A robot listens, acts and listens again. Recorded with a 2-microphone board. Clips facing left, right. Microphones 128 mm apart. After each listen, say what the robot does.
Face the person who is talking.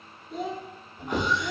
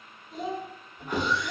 Turn 90° left.
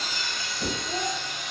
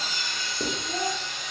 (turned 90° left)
Turn 10° left.
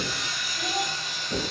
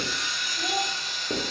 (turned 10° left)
Keep listening.
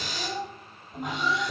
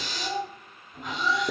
Found it: a child speaking, straight ahead.